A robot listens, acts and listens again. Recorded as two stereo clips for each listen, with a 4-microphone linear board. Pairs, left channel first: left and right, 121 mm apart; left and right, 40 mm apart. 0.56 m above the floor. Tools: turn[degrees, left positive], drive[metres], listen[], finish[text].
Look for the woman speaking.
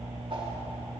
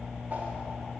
Action: listen[]
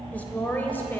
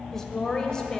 Thought: The woman speaking: about 15° left or 165° left.
Action: turn[15]
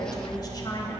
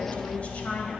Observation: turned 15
Thought: The woman speaking: about 35° left or 145° left.
Action: turn[35]
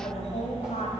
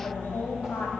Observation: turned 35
Thought: So it is at 110° left.
Action: turn[110]
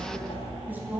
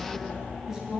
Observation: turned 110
Thought: The woman speaking is now 15° right.
Action: turn[-15]
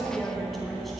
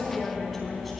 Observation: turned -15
Action: finish[Facing the woman speaking.]